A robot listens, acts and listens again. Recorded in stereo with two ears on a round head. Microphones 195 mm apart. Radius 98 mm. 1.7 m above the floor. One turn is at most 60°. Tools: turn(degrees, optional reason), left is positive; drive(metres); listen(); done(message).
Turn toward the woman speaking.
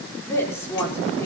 turn(degrees=30)
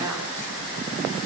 turn(degrees=-15, reason="So it is at 15° right.")
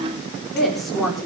done("Found it: a woman speaking, straight ahead, over 4 m away.")